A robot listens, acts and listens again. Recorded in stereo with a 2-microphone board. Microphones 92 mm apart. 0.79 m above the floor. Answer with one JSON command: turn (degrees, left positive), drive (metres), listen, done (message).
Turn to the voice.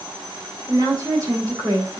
{"turn": -40}
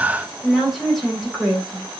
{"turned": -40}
{"done": "Found it: a woman speaking, straight ahead, over 4 m away."}